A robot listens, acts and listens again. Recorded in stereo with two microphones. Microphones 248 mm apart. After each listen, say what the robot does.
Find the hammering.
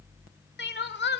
Keep listening.
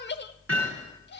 Turn 60° right.
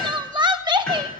Facing the hammering, over 4 m away.